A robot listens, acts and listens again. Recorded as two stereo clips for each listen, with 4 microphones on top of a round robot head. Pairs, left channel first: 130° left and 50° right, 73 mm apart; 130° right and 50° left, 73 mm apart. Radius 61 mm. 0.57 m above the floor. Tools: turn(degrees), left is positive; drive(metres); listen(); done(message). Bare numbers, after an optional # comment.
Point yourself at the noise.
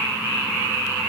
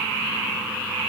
listen()
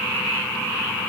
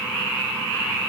listen()
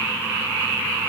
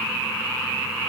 done("I can't make out anything to turn to.")